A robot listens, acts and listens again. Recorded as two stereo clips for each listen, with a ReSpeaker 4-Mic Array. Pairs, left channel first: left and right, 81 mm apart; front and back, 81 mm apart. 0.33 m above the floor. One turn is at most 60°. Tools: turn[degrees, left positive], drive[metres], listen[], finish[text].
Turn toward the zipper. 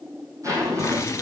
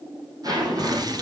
Thought: The zipper: 140° right.
Action: turn[-60]
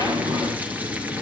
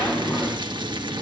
Thought: The zipper is now 85° right.
Action: turn[-60]
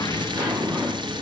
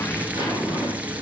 Thought: The zipper is now 30° right.
Action: turn[-30]
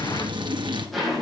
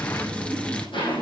Action: finish[Facing the zipper, over 4 m away.]